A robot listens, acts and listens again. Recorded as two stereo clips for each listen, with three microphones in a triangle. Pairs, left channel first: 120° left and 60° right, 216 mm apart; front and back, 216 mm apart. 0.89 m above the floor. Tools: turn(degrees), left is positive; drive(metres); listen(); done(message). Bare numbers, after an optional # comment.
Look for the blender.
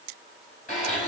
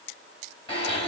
# The blender: 65° left.
turn(65)
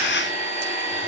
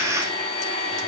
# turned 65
done("Found it: a blender, straight ahead, 2 to 4 m away.")